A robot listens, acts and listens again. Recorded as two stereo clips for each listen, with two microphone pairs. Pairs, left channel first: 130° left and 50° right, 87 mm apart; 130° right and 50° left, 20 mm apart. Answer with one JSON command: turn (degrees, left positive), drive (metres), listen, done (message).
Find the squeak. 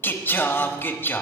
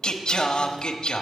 {"listen": true}
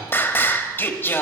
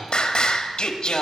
{"listen": true}
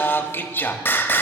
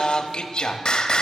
{"done": "I can't make out a squeak, only singing."}